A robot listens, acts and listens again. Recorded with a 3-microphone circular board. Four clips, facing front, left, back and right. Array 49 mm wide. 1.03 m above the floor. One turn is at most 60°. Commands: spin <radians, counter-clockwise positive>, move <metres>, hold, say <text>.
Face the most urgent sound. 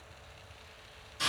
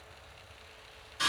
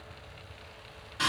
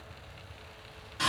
hold
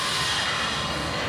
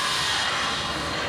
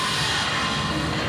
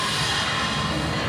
hold
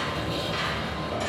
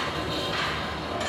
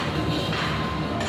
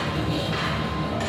say I can't make out anything urgent, only sawing.